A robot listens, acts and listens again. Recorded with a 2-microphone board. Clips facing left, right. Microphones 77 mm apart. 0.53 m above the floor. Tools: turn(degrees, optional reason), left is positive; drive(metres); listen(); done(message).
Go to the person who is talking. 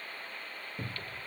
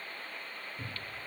listen()
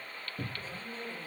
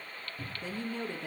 turn(degrees=-65, reason="The woman speaking: about 65° right or 115° right.")
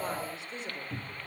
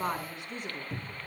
turn(degrees=-55, reason="So it is at 55° right.")
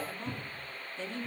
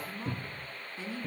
turn(degrees=-10, reason="The woman speaking is now 10° right.")
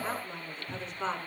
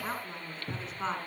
drive(metres=1.0)
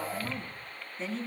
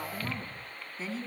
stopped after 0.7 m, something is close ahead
done("Blocked. The woman speaking is further on, straight ahead.")